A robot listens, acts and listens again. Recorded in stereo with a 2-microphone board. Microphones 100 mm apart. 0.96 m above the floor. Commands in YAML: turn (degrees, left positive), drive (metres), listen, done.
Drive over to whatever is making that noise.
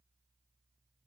listen: true
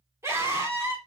turn: -30
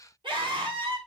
turn: -120
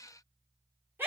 turn: -20
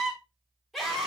drive: 1.0
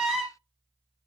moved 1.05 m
drive: 1.0
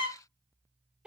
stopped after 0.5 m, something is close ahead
turn: -10
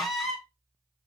done: "Something is in my way. I am facing the scream but have not reached it."